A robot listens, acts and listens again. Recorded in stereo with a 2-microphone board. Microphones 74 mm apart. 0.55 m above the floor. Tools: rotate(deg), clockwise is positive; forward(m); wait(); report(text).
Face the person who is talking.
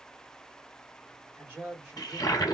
rotate(25)
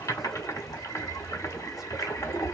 wait()
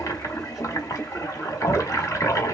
wait()
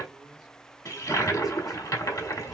report("I heard a man speaking, but can't make it out now. It was about straight ahead or 130° right.")